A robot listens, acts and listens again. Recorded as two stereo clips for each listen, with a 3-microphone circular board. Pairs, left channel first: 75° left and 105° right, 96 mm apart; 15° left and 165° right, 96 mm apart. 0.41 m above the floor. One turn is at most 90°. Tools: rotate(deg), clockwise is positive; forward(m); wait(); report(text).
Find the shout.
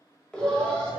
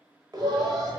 rotate(90)
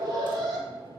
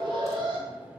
rotate(90)
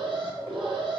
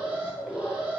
rotate(10)
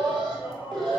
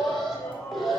rotate(35)
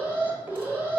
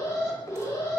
wait()
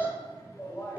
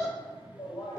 rotate(-10)
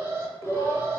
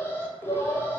report("Facing the shout, 1 to 2 m away.")